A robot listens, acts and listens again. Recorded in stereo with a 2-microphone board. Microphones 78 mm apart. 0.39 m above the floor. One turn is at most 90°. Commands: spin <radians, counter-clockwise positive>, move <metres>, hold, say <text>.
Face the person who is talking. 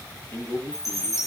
spin 0.52
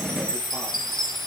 hold
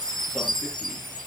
hold
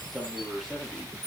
say Facing the man speaking, over 4 m away.